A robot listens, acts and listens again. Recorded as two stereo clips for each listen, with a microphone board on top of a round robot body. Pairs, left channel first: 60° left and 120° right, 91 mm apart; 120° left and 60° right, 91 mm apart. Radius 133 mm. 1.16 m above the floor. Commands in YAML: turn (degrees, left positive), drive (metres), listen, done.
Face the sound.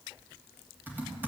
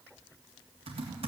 turn: -50
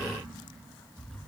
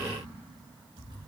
turn: -20
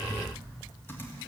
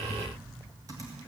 done: "Facing the typing on a keyboard."